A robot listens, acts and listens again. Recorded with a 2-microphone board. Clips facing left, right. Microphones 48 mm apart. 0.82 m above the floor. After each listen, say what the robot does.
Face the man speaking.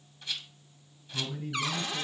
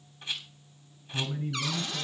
Turn 30° right.
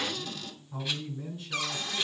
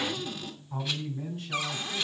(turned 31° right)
Turn 115° right.
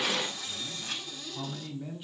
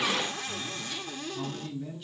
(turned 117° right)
Turn 15° left.
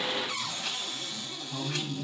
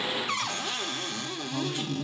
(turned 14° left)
Facing the man speaking.